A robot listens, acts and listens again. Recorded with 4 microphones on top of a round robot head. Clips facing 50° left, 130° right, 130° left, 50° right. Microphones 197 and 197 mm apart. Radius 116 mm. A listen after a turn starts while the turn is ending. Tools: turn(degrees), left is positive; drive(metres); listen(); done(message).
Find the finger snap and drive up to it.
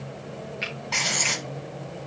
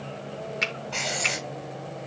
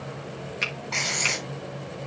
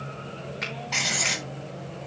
turn(degrees=-170)
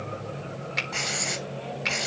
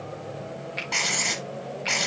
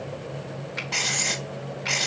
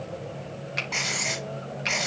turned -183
turn(degrees=15)
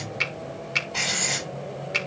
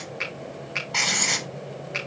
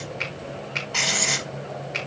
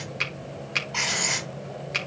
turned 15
drive(metres=1.0)
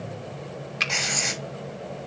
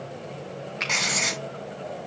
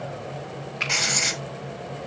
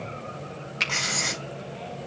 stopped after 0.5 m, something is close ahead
done("Something is in my way. I am facing the finger snap but have not reached it.")